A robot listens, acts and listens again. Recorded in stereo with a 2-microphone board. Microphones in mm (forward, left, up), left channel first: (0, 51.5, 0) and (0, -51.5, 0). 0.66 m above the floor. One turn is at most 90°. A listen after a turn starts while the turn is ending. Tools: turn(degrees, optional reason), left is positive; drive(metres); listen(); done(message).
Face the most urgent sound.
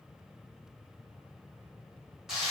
listen()
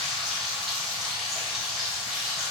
listen()
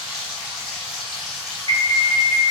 turn(degrees=-60, reason="The alarm: about 60° right or 120° right.")
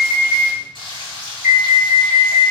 turn(degrees=-10, reason="So it is at 10° right.")
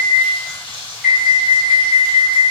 done("Facing the alarm, 1 to 2 m away.")